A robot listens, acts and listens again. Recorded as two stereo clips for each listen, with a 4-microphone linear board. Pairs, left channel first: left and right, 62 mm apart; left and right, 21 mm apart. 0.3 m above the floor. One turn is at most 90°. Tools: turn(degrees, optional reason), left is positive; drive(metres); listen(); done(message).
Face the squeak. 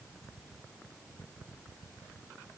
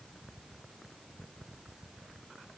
listen()
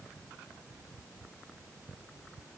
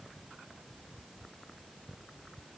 listen()
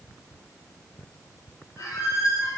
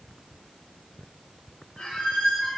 turn(degrees=70, reason="The squeak: about 70° left or 110° left.")
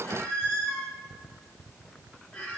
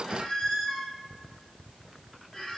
turn(degrees=25, reason="So it is at 25° left.")
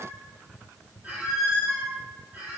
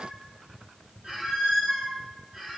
turn(degrees=-25, reason="The squeak is now 25° right.")
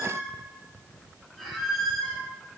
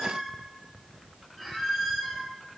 done("Facing the squeak, under 1 m away.")